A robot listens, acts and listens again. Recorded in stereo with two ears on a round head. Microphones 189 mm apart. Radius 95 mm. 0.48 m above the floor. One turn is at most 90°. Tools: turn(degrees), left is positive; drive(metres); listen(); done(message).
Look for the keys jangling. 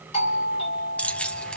turn(degrees=30)
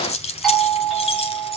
turn(degrees=90)
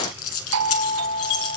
turn(degrees=75)
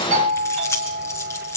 turn(degrees=15)
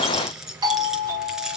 done("Found it: keys jangling, straight ahead, over 4 m away.")